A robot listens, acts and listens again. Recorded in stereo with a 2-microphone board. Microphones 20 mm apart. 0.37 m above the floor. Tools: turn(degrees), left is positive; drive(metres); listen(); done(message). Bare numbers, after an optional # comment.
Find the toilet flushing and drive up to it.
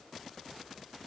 listen()
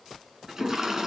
# The toilet flushing: about 25° right or 155° right.
turn(-25)
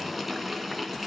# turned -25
drive(1.0)
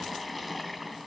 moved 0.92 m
drive(1.0)
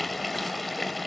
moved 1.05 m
drive(1.0)
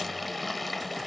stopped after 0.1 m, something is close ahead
done("Arrived at the toilet flushing, straight ahead.")